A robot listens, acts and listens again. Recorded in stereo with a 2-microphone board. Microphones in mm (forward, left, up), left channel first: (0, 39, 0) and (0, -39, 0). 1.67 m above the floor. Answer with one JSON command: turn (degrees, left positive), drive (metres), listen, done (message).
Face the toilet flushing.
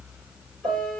{"listen": true}
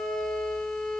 {"listen": true}
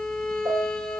{"done": "I can't make out a toilet flushing to turn to."}